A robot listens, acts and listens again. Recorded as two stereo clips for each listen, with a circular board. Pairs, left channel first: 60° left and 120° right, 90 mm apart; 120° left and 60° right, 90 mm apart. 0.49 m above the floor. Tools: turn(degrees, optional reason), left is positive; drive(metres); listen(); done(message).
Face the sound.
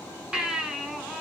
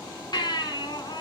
turn(degrees=160, reason="The baby crying: 160° left.")
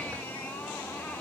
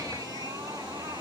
listen()
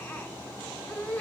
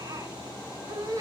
turn(degrees=-10, reason="The baby crying is now 10° right.")
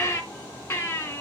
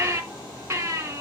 done("Found it: a baby crying, straight ahead, 2 to 4 m away.")